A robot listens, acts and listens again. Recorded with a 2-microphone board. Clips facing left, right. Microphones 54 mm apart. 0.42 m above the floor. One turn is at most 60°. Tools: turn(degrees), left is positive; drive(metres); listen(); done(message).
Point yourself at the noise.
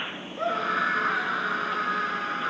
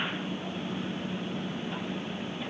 turn(degrees=60)
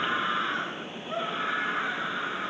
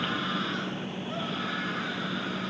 turn(degrees=25)
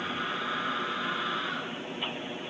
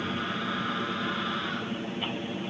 done("Found it: a scream, straight ahead.")